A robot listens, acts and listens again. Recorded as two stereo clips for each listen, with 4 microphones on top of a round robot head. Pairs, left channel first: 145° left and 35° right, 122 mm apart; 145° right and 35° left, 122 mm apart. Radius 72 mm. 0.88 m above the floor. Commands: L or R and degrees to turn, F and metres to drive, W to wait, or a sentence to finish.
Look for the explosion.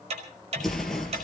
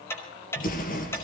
R125
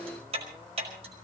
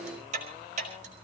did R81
R45
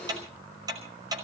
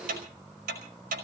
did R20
R25
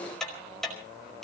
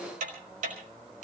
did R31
Facing where the explosion came from. I can't hear it now.